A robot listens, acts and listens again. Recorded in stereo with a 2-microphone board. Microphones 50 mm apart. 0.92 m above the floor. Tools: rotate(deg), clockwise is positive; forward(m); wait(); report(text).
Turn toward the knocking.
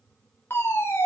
wait()
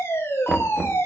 rotate(30)
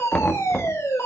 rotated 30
rotate(-20)
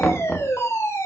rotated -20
report("Facing the knocking.")